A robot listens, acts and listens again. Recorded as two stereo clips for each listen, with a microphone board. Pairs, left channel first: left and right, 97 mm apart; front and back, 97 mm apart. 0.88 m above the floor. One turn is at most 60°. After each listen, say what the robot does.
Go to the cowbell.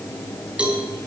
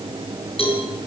Turn 10° right.
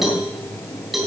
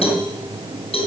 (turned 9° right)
Drive 1.0 m forward.
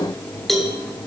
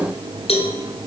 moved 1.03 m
Drive 1.0 m forward.
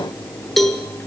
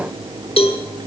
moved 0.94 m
Drive 1.0 m forward.
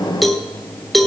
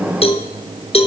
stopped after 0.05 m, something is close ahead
I am next to the cowbell.